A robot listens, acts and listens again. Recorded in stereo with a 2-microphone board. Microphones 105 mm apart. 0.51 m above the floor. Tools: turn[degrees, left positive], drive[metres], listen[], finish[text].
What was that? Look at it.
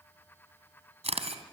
Action: turn[-90]
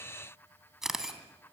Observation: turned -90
Action: finish[Found it: a camera shutter, straight ahead.]